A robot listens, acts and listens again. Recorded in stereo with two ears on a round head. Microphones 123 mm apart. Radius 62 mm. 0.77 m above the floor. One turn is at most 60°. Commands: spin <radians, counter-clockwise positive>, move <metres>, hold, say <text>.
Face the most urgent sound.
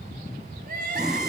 spin -1.05
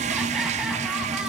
hold
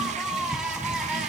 say Facing the crying, over 4 m away.